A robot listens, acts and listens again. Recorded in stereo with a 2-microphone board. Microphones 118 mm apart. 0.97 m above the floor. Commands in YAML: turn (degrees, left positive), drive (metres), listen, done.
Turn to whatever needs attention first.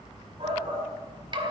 turn: -50
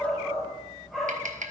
done: "Found it: a shout, straight ahead, 2 to 4 m away."